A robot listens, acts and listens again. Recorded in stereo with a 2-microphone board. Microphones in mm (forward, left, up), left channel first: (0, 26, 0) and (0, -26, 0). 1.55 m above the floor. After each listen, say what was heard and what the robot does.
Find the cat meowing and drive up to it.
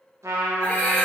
The cat meowing: about 25° left or 155° left. Turn 25° left.
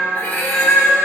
So it is at 125° left. Turn 125° left.
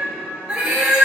The cat meowing is now 20° right. Turn 20° right.
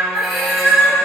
Drive 1.0 m forward.
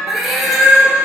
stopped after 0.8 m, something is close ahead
I am next to the cat meowing.